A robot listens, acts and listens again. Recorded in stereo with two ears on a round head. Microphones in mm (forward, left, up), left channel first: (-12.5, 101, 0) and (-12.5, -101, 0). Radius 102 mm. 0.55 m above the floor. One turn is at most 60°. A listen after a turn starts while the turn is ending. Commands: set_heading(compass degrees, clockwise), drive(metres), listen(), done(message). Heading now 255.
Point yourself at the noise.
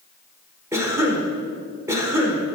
set_heading(285)
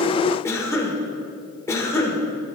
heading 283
set_heading(268)
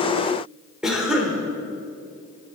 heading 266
done("Found it: a cough, straight ahead, 1 to 2 m away.")